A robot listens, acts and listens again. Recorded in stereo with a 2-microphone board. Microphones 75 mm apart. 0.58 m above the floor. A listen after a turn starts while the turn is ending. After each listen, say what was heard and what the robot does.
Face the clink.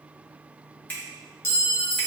The clink: about 35° left or 145° left. Turn 35° left.
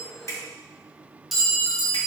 Found it: a clink, straight ahead.